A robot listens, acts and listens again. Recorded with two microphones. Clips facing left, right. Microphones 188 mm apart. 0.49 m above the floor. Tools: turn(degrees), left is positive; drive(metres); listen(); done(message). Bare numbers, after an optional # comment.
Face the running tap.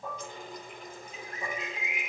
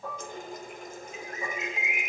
# The running tap: about 50° right or 130° right.
turn(-50)
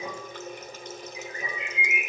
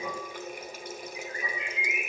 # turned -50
# So it is at 10° right.
turn(-10)
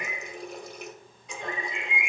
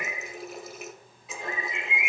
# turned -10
done("Facing the running tap.")